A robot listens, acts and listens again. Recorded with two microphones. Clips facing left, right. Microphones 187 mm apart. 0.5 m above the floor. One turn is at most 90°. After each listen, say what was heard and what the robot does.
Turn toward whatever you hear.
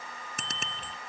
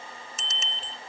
The bicycle bell: about 60° left or 120° left. Turn 60° left.
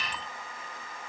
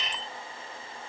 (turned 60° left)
So it is at 60° left. Turn 60° left.
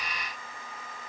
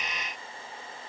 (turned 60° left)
Keep listening.
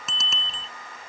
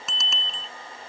Found it: a bicycle bell, straight ahead.